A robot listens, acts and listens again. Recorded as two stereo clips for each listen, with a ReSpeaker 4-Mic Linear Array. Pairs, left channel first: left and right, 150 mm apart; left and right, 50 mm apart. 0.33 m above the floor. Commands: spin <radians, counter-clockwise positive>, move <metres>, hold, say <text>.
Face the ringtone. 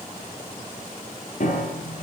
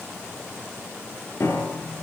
hold
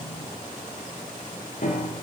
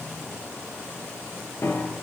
hold
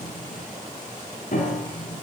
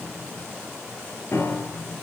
say I can't make out a ringtone, only a piano.